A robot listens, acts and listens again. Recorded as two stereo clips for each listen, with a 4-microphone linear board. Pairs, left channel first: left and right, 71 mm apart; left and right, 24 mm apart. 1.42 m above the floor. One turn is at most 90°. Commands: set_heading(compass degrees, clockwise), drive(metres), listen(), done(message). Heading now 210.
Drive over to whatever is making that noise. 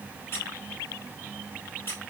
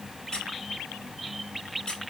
set_heading(175)
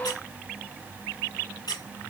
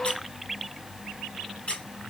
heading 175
set_heading(85)
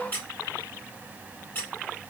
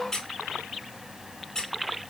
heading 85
set_heading(60)
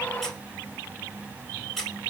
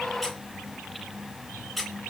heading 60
drive(1.0)
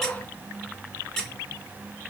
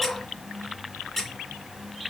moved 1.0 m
drive(1.0)
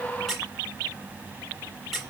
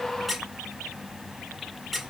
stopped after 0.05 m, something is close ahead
done("I am next to the squeak.")